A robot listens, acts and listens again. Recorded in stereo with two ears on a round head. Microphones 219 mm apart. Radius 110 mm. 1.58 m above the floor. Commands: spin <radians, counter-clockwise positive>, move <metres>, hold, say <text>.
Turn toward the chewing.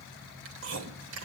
spin -0.96
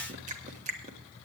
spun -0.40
spin -0.52
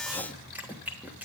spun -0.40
say Found it: chewing, straight ahead, 1 to 2 m away.